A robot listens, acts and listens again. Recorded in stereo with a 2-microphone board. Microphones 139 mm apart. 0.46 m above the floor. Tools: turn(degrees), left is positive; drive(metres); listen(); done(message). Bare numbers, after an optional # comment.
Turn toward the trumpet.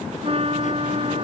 # The trumpet: about 45° right or 135° right.
turn(-45)
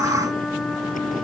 done("Found it: a trumpet, straight ahead.")